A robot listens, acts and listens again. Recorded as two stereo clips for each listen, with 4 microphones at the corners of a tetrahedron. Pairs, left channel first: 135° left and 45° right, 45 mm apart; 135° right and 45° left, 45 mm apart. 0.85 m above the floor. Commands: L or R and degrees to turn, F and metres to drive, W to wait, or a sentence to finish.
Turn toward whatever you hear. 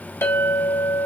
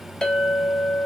L150
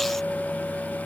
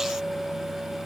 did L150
L35
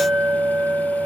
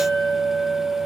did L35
Found it: a clink, straight ahead, 2 to 4 m away.